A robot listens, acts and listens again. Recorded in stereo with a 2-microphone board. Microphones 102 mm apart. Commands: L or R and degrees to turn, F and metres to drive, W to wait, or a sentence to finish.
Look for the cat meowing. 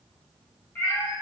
L20
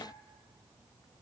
W
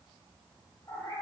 L35
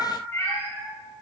L30
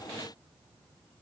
W
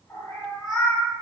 L30
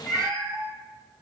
Found it: a cat meowing, straight ahead, 1 to 2 m away.